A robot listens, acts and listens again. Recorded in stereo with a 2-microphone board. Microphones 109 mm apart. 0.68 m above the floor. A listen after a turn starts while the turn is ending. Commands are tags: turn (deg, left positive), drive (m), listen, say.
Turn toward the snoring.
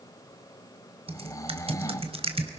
<turn deg="30"/>
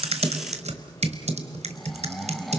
<say>Found it: snoring, straight ahead, 1 to 2 m away.</say>